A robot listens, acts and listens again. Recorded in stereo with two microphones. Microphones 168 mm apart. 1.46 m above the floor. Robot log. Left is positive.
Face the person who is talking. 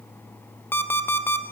cmd idle
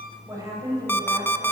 note: The woman speaking: about 20° right or 160° right.
cmd yaw -20
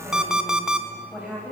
cmd yaw -30
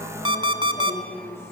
note: So it is at 15° left.
cmd yaw +15
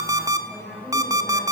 end: Found it: a woman speaking, straight ahead.